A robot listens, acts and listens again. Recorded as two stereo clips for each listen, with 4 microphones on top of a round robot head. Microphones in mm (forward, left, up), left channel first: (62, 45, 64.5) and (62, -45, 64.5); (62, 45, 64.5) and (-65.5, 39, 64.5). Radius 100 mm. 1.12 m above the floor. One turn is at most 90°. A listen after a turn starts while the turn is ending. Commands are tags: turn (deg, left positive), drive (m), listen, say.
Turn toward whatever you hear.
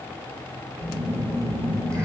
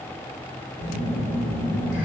<turn deg="-35"/>
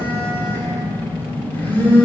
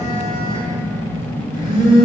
<turn deg="20"/>
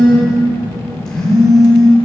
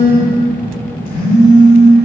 <say>Facing the phone buzzing, 1 to 2 m away.</say>